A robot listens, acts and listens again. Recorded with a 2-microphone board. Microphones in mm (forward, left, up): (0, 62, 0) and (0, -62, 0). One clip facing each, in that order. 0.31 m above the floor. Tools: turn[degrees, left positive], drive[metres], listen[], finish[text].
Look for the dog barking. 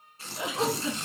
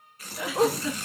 Thought: The dog barking: about 20° right or 160° right.
Action: turn[-20]
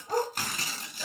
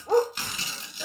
Thought: So it is at 140° right.
Action: turn[-140]
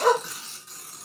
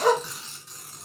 Thought: The dog barking is now 10° right.
Action: turn[-10]
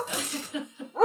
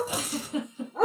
Action: finish[Found it: a dog barking, straight ahead.]